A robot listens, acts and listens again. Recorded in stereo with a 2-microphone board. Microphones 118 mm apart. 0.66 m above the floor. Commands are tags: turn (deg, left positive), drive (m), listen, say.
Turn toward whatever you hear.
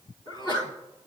<turn deg="40"/>
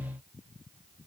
<listen/>
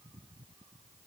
<say>I heard a sneeze, but can't make it out now. It was about straight ahead or 100° left.</say>